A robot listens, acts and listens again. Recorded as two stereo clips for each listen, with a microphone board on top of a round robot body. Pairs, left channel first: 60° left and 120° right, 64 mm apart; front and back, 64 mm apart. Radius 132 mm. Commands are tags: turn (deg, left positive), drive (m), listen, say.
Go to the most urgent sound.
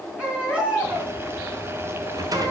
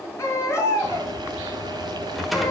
<turn deg="-50"/>
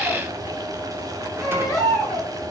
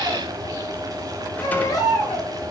<turn deg="-25"/>
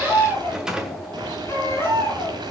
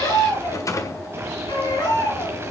<drive m="1.0"/>
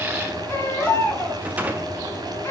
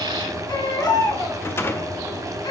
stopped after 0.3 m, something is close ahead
<say>Something is in my way. I am facing the baby crying but have not reached it.</say>